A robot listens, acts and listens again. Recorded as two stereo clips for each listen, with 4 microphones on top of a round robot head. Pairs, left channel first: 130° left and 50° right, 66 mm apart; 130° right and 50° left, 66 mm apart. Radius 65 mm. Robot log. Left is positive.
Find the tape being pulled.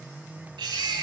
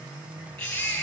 cmd idle
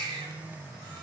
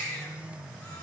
cmd idle
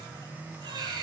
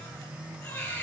end: I can't make out tape being pulled to turn to.